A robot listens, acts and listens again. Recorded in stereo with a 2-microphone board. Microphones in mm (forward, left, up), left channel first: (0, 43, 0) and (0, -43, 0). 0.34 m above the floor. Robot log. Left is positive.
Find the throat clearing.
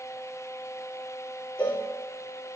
cmd idle
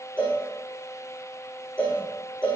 cmd idle
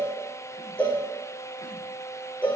end: I can't make out throat clearing to turn to.